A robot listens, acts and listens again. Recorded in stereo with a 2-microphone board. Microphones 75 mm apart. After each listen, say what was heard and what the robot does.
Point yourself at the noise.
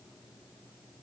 Keep listening.
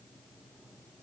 Keep listening.
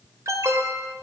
The alarm: about 50° right or 130° right. Turn 50° right.
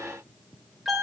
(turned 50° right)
Facing the alarm, 2 to 4 m away.